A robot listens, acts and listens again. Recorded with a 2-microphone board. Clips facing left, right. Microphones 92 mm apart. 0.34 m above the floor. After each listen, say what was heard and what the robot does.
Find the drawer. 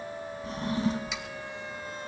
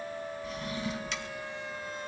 The drawer: about 40° left or 140° left. Turn 40° left.
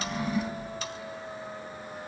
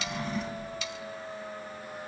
Facing the drawer.